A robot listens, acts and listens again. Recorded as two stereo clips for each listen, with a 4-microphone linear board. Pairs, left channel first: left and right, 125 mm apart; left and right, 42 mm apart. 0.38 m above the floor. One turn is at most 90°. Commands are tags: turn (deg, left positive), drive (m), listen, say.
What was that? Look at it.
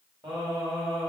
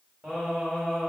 <turn deg="-30"/>
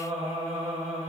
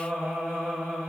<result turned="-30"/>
<turn deg="-90"/>
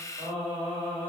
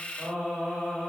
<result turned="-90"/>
<turn deg="-55"/>
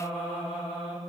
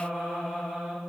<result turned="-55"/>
<say>Found it: singing, straight ahead, 1 to 2 m away.</say>